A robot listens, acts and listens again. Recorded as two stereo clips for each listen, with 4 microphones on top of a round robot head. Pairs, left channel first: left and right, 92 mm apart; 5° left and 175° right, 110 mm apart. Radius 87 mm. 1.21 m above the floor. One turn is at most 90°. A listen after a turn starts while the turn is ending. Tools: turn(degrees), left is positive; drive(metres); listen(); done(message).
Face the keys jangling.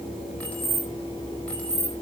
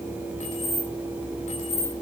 turn(degrees=15)
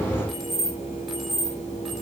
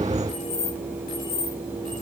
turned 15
done("Found it: keys jangling, straight ahead.")